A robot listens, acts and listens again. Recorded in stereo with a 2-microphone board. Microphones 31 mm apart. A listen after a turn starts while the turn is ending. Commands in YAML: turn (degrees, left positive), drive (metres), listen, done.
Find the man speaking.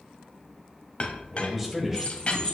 turn: -30
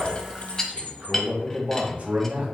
turn: -120
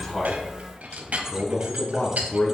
turn: 25
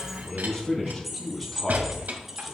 turn: 10
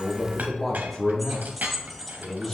done: "Facing the man speaking."